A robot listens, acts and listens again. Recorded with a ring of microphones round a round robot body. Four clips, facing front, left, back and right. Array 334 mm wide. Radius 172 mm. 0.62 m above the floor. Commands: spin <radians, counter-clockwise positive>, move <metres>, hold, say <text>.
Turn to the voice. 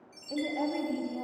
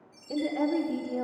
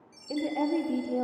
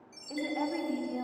spin 2.79
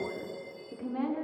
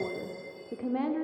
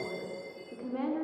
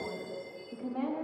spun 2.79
spin 1.66
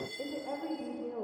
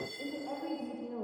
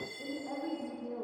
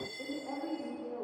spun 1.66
spin 0.17
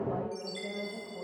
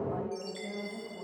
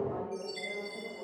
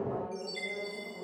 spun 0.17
say Found it: a woman speaking, straight ahead, 2 to 4 m away.